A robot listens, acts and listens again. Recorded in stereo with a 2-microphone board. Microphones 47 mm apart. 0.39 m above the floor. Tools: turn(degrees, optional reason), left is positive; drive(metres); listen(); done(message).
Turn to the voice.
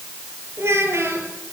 turn(degrees=-90)
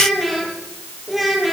done("Facing the child speaking, over 4 m away.")